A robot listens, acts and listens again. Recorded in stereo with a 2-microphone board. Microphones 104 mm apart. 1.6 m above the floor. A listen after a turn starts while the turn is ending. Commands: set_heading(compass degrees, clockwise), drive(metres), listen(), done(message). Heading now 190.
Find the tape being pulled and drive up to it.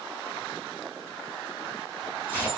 set_heading(175)
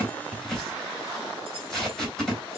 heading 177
drive(1.0)
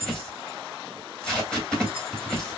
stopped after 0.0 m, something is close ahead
set_heading(167)
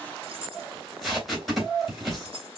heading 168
done("Something is in my way. I am facing the tape being pulled but have not reached it.")